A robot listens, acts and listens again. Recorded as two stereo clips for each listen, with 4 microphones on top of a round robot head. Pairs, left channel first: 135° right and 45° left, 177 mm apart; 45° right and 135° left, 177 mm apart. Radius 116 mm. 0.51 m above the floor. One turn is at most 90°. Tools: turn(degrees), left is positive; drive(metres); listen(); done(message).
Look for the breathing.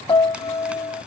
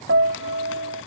listen()
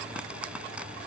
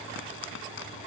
listen()
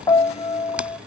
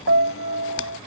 done("I can't make out breathing to turn to.")